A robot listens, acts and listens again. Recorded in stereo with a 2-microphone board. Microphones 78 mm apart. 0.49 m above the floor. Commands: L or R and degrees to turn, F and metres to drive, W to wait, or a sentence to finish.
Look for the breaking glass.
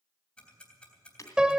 L40
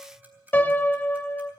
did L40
W
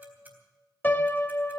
I heard breaking glass, but can't make it out now. It was about straight ahead or 100° left.